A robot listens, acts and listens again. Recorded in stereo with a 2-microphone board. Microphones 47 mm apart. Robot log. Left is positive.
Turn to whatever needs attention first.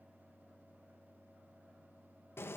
cmd idle
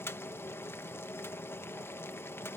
cmd idle
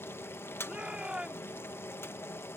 note: The shout: about 25° right or 155° right.
cmd yaw -25
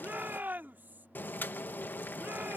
note: So it is at 130° right.
cmd yaw -130
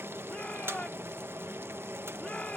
note: The shout is now 30° left.
cmd yaw +30
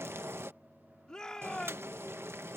note: The shout is now 15° left.
cmd yaw +15
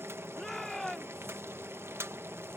end: Facing the shout.